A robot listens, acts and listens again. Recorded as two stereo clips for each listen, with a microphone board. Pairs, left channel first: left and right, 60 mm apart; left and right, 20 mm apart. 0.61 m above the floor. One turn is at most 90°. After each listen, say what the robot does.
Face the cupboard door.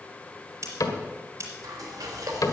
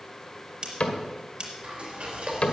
Turn 70° left.
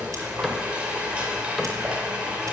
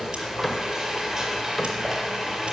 Found it: a cupboard door, straight ahead.